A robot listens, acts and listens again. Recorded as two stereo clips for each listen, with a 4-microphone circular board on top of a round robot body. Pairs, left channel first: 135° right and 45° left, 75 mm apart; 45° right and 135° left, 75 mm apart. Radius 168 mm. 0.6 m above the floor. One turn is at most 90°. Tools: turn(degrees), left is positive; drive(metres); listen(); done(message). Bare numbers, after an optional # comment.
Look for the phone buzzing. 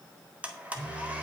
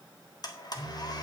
# The phone buzzing: 75° right.
turn(-75)
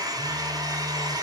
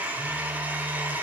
listen()
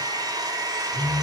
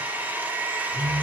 # The phone buzzing is now 25° left.
turn(25)
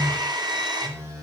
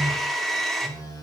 done("Found it: a phone buzzing, straight ahead.")